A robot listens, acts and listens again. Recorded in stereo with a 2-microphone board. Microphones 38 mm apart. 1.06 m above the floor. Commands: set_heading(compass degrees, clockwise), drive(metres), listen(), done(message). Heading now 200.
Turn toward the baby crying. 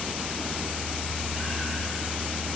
listen()
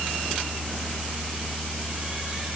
listen()
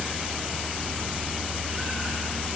done("I can't make out a baby crying.")